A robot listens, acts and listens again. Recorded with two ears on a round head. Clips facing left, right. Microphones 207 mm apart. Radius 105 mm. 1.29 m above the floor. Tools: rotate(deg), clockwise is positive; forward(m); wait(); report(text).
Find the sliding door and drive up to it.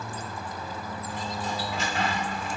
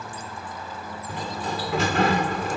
rotate(50)
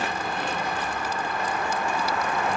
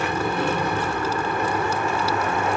rotate(80)
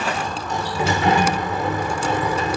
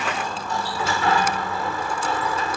rotate(-20)
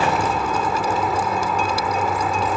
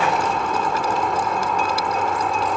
forward(1.0)
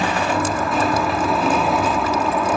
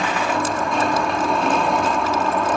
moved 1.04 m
forward(1.0)
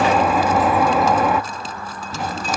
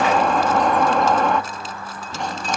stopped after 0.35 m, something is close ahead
report("Arrived at the sliding door, straight ahead.")